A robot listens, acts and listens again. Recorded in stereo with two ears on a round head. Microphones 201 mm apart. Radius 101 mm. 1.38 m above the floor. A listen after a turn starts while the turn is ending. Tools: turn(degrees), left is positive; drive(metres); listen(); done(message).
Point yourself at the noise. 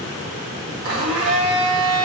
turn(degrees=-60)
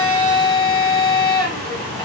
done("Facing the blender, 1 to 2 m away.")